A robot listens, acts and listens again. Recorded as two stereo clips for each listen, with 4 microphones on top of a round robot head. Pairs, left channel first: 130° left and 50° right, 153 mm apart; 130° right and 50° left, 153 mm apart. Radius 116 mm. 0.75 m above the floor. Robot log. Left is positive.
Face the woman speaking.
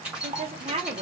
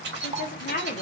note: The woman speaking: 100° right.
cmd yaw -100
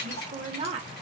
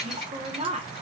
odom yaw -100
end: Facing the woman speaking, 1 to 2 m away.